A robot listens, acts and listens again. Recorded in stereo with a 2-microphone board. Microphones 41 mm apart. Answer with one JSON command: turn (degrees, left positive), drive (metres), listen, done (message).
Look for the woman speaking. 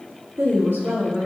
{"turn": -90}
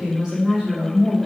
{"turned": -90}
{"turn": -20}
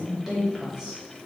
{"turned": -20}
{"turn": -10}
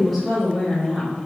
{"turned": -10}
{"done": "Facing the woman speaking."}